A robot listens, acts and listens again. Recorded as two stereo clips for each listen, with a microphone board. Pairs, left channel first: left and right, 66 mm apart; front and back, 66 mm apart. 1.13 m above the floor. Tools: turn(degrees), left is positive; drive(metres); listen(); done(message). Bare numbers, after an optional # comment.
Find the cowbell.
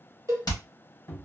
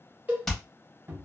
# The cowbell: 115° right.
turn(-115)
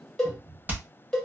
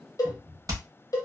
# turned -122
# The cowbell is now 10° left.
turn(10)
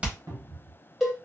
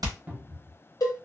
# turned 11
done("Found it: a cowbell, straight ahead, 1 to 2 m away.")